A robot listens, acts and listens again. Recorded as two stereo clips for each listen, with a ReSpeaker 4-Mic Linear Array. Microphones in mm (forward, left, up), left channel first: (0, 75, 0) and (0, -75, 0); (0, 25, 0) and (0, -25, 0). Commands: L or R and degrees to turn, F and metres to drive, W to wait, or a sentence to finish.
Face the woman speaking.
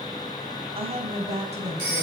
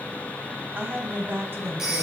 R45
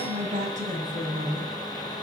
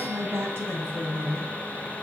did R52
R50
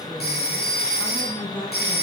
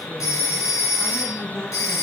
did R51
L10
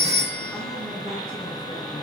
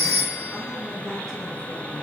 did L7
W
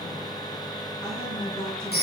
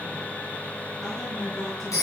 Found it: a woman speaking, straight ahead.